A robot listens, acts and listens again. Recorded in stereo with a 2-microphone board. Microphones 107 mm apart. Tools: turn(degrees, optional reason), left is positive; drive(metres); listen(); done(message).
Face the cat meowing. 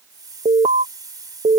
listen()
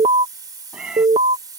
turn(degrees=-30)
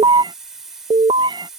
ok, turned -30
turn(degrees=-135, reason="So it is at 135° right.")
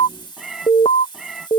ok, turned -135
done("Found it: a cat meowing, straight ahead.")